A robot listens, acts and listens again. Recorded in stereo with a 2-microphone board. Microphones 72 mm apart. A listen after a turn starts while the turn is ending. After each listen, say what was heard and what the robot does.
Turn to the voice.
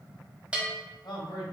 The man speaking: about 75° left or 105° left. Turn 75° left.
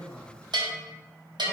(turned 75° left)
Keep listening.
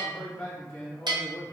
So it is at 25° left. Turn 25° left.
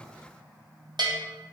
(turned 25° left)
Keep listening.
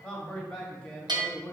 The man speaking is now 15° left. Turn 15° left.
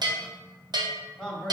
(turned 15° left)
Facing the man speaking, 1 to 2 m away.